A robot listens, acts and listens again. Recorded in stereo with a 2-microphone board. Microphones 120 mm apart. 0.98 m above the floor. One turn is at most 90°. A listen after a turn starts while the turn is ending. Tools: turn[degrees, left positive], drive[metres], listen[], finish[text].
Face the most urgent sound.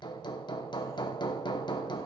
Action: listen[]
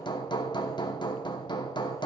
Action: listen[]
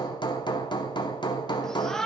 Action: turn[30]
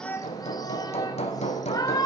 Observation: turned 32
Thought: So it is at 145° left.
Action: turn[90]
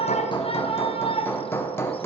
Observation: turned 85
Thought: The shout is now 60° left.
Action: turn[60]
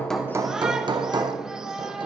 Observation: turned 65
Action: finish[Facing the shout.]